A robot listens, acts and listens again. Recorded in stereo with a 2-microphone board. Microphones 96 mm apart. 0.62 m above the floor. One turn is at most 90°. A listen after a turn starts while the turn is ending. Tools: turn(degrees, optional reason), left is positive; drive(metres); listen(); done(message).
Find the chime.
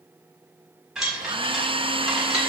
turn(degrees=-30)
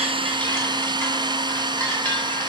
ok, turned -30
turn(degrees=25, reason="So it is at 25° left.")
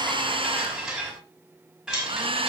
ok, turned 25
turn(degrees=-10, reason="The chime is now 10° right.")
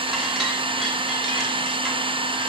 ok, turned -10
listen()
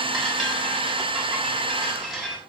done("Found it: a chime, straight ahead, over 4 m away.")